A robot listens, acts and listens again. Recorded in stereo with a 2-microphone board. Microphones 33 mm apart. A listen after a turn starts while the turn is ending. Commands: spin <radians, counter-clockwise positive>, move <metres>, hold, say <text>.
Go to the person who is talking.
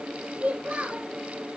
spin -1.22
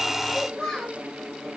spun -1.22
move 1.0
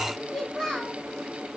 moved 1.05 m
move 1.0
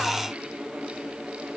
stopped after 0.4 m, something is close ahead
hold
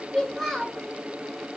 say Blocked. The child speaking is further on, straight ahead.